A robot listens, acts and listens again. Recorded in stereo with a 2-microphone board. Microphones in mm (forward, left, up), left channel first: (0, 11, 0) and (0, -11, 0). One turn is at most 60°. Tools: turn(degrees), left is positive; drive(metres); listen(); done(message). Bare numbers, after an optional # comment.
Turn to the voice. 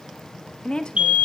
# The woman speaking: about 50° left or 130° left.
turn(50)
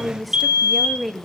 done("Found it: a woman speaking, straight ahead.")